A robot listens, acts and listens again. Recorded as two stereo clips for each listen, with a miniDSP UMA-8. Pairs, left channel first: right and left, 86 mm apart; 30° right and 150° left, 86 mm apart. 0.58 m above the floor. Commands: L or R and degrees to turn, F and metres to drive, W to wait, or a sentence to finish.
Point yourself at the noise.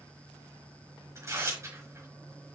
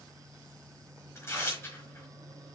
L30
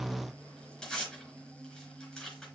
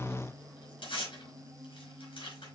R10
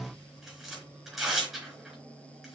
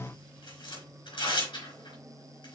Found it: tearing paper, straight ahead.